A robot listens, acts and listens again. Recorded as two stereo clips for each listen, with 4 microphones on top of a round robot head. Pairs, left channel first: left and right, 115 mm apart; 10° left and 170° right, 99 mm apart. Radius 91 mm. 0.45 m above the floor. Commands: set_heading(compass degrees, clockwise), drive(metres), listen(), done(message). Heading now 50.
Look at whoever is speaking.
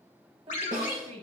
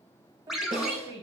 set_heading(180)
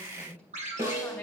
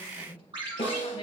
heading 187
set_heading(177)
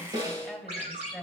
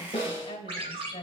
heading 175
done("Found it: a woman speaking, straight ahead.")